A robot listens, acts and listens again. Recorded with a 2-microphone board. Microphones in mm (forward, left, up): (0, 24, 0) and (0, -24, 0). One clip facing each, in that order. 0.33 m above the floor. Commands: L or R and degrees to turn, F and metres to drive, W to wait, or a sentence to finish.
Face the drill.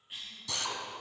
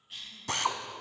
R45
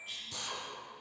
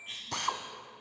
R85
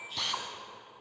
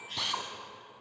Found it: a drill, straight ahead.